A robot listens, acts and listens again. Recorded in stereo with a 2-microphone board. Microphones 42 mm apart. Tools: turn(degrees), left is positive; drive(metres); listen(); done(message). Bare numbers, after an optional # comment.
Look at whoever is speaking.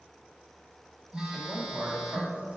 # The man speaking: about 30° right or 150° right.
turn(-30)
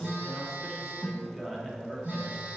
done("Found it: a man speaking, straight ahead, under 1 m away.")